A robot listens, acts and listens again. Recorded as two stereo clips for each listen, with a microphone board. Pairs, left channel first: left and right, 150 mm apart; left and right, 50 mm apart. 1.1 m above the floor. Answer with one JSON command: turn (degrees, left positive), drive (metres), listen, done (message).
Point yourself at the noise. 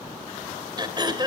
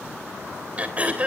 {"turn": -30}
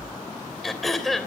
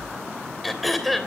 {"done": "Facing the throat clearing."}